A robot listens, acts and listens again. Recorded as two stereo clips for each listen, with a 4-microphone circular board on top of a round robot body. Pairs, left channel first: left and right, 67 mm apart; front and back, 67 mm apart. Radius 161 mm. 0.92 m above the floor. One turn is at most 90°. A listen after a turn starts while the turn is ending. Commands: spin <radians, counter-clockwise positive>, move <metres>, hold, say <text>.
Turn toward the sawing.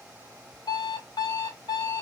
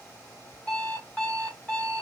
hold
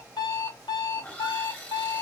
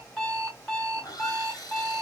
spin 0.44
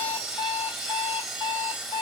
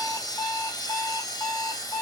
say Facing the sawing, 1 to 2 m away.